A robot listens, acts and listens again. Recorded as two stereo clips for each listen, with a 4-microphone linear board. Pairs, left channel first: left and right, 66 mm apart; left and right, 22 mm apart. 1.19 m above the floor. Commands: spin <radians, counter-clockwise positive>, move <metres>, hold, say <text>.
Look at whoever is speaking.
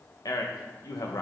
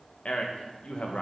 spin 1.13
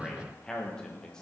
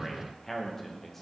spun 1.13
spin 0.17
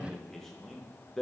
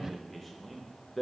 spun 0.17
say Facing the man speaking.